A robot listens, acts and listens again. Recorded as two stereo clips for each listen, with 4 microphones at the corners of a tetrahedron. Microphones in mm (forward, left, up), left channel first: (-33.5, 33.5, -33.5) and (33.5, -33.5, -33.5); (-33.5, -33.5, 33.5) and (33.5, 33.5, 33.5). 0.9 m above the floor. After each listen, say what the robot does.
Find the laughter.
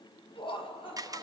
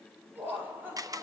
Turn 115° left.
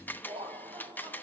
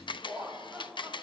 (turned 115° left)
Turn 30° right.
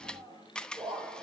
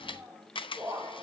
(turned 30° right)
Turn 10° right.
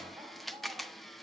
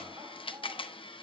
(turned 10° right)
Keep listening.
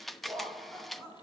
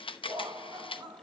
Turn 10° left.
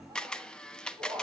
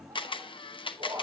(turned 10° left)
Found it: laughter, straight ahead, over 4 m away.